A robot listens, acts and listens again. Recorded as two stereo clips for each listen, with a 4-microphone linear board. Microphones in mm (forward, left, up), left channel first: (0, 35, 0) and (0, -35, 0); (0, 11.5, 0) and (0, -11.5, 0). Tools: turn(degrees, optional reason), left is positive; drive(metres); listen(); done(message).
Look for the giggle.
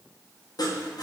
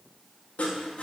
listen()
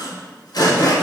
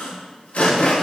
listen()
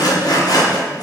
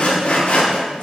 done("I can't make out a giggle to turn to.")